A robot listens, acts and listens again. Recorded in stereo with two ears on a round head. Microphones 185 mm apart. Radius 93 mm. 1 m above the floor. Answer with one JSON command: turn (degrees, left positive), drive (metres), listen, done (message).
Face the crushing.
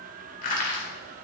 {"turn": 45}
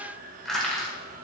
{"done": "Found it: crushing, straight ahead."}